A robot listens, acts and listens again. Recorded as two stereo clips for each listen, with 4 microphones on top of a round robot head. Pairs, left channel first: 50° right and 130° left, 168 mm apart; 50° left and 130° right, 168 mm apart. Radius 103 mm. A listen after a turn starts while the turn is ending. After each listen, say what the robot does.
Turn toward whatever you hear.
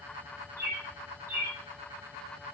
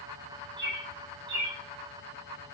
Turn 150° right.
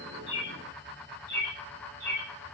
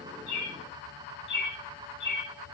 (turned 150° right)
Turn 30° left.
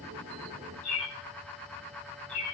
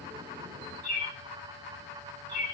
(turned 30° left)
Found it: a bird, straight ahead, under 1 m away.